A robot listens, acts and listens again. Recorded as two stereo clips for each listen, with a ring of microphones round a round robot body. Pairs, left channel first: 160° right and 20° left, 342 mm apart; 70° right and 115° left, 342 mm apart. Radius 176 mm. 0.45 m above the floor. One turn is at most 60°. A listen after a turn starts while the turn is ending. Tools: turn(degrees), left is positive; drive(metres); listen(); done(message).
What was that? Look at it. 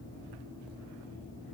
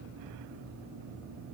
listen()
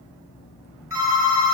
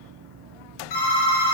turn(degrees=-60)
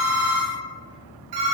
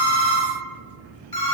turn(degrees=10)
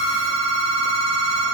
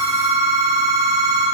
done("Found it: a phone ringing, straight ahead.")